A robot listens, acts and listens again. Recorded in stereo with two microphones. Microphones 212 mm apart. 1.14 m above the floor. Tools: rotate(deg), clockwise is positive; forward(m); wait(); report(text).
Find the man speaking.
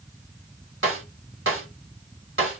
wait()
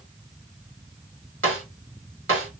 wait()
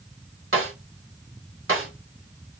report("I can't make out a man speaking to turn to.")